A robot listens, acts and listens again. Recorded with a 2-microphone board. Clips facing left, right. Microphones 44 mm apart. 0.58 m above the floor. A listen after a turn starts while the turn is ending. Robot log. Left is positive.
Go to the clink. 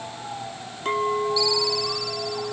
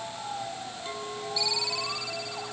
note: The clink: about 50° left or 130° left.
cmd yaw +50
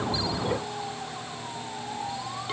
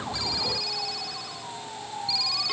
cmd idle
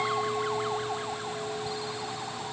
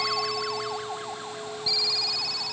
cmd fwd 1.0
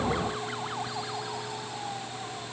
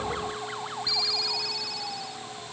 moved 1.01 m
cmd idle
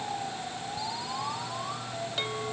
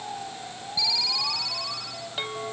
note: The clink is now 10° right.
cmd yaw -10
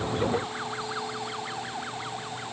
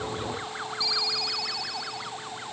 cmd idle
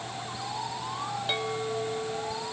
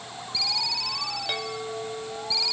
cmd fwd 1.0
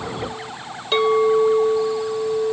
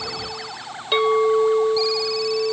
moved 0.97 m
cmd fwd 1.0
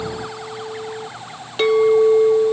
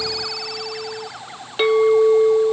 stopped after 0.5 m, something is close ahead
note: The clink is now 10° right.
cmd yaw -10
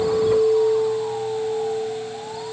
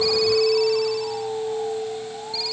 end: Arrived at the clink, straight ahead.